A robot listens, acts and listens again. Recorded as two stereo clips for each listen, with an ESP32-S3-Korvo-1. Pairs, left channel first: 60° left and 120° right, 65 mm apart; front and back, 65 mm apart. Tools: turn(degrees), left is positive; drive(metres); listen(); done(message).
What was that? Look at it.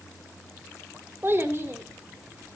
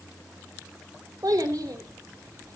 turn(degrees=-170)
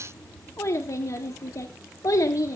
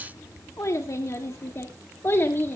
turn(degrees=50)
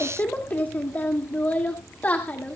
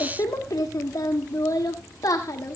done("Found it: a child speaking, straight ahead, 1 to 2 m away.")